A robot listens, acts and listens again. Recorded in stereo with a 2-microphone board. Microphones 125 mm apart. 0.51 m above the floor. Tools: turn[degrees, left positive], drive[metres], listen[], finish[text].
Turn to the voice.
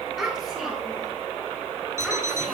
Action: turn[30]
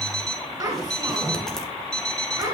Thought: So it is at 30° right.
Action: turn[-30]
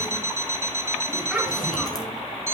Action: finish[Found it: a child speaking, straight ahead.]